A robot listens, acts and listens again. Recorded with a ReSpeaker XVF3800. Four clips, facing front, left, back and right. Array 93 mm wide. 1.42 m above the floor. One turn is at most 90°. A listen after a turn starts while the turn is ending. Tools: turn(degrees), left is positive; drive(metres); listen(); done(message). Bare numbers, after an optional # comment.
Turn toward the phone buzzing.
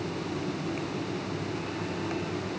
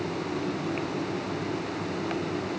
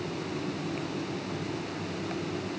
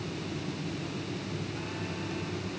listen()
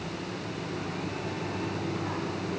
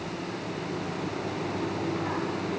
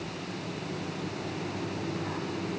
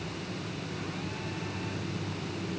listen()
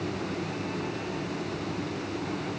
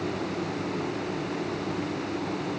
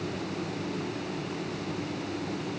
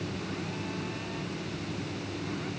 done("I can't make out a phone buzzing.")